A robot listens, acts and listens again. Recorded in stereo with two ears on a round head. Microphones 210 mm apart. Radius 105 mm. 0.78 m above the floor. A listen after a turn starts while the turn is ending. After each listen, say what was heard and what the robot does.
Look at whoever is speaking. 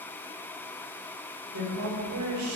The woman speaking: about 70° right or 110° right. Turn 70° right.
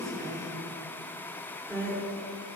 So it is at 15° right. Turn 15° right.
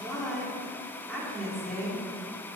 Facing the woman speaking, 2 to 4 m away.